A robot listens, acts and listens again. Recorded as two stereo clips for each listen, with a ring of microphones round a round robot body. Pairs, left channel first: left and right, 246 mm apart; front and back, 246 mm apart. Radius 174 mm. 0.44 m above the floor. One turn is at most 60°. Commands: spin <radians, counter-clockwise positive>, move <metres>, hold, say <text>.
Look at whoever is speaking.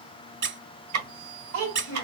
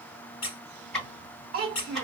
spin -1.05
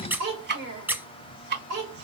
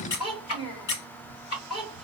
spin -1.05
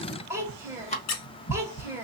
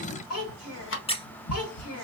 spin -0.17
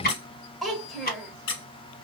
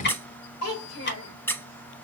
say Found it: a child speaking, straight ahead.